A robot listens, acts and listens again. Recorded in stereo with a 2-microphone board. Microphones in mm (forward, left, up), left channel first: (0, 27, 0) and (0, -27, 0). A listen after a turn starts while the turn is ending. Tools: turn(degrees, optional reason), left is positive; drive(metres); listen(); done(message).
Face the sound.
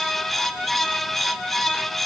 listen()
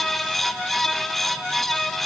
listen()
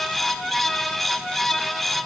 done("I can't make out anything.")